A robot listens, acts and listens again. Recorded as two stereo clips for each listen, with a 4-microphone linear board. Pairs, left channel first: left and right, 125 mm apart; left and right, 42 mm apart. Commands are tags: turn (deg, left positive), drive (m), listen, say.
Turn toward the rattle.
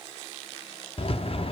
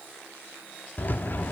<turn deg="50"/>
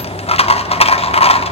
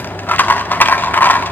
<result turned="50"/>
<turn deg="70"/>
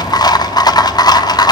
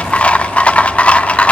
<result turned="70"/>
<turn deg="40"/>
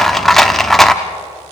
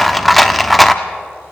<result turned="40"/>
<say>Found it: a rattle, straight ahead.</say>